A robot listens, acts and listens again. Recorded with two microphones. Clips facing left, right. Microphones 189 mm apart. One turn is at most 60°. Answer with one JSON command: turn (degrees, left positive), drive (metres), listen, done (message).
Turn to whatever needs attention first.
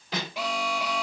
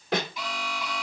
{"turn": 60}
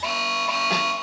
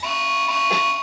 {"turn": 35}
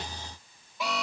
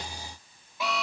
{"done": "Facing the alarm."}